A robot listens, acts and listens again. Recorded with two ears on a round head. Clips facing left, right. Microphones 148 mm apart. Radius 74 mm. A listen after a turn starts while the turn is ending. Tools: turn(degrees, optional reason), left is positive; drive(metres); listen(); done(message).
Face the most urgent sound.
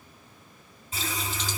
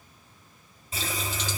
listen()
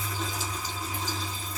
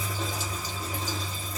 listen()
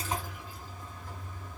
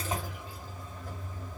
done("I can't make out anything urgent to turn to.")